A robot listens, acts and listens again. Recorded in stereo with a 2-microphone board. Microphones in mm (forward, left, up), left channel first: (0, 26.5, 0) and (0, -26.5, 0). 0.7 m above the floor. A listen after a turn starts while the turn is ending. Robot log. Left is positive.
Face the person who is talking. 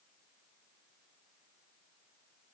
cmd idle
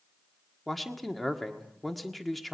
cmd yaw +30
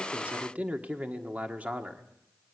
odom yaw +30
note: So it is at 30° right.
cmd yaw -30
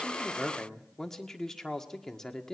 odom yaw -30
note: The man speaking is now 10° left.
cmd yaw +10
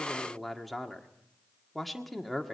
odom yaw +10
end: Found it: a man speaking, straight ahead.